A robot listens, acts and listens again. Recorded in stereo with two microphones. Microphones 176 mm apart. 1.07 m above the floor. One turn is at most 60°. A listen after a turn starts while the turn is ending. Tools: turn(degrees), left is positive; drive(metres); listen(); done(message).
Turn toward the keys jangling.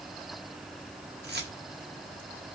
turn(degrees=-60)
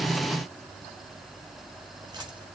listen()
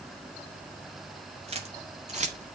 turn(degrees=-40)
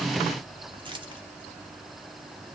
turn(degrees=-25)
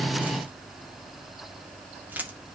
turn(degrees=-10)
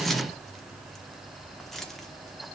done("Found it: keys jangling, straight ahead, 1 to 2 m away.")